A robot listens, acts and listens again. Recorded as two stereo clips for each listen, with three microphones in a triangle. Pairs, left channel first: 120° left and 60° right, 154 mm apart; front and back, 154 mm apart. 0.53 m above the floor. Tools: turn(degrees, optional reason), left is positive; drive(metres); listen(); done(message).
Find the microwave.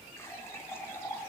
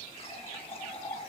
listen()
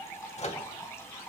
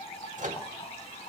turn(degrees=155, reason="The microwave: 155° left.")
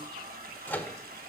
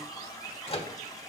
turn(degrees=45, reason="The microwave is now 45° left.")
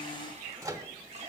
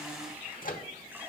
done("Found it: a microwave, straight ahead.")